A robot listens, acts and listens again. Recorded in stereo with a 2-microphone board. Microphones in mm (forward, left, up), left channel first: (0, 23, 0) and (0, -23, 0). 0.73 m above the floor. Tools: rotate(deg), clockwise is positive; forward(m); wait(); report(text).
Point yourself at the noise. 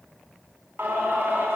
rotate(55)
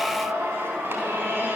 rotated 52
rotate(70)
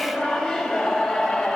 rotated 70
report("Found it: singing, straight ahead.")